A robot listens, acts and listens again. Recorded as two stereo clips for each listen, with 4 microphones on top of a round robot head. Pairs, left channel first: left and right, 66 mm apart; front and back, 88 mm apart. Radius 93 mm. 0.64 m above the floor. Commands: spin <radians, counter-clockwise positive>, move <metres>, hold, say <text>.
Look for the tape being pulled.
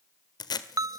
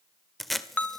spin 1.57
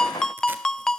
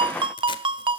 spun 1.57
hold
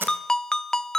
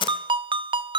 spin -0.52
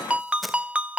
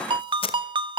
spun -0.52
say Facing the tape being pulled, 1 to 2 m away.